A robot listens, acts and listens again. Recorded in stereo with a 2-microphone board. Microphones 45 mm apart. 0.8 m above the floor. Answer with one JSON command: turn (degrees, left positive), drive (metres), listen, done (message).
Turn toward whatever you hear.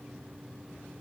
{"listen": true}
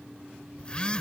{"turn": 25}
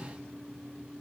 {"listen": true}
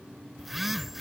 {"done": "Found it: a phone buzzing, straight ahead."}